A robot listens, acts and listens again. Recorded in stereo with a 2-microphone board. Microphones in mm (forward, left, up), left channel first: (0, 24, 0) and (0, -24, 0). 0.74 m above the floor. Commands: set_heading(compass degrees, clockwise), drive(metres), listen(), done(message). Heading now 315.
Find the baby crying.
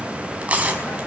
listen()
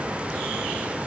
listen()
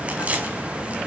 done("I can't make out a baby crying to turn to.")